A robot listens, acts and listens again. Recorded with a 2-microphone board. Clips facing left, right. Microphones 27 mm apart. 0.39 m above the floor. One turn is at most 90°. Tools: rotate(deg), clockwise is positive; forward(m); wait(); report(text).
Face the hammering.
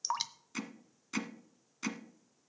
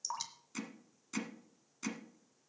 rotate(-25)
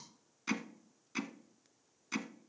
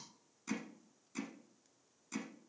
rotate(-90)
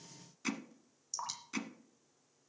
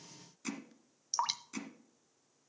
rotate(-25)
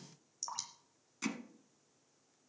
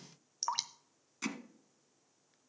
rotate(10)
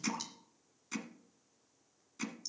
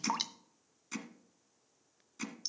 report("Facing the hammering, 1 to 2 m away.")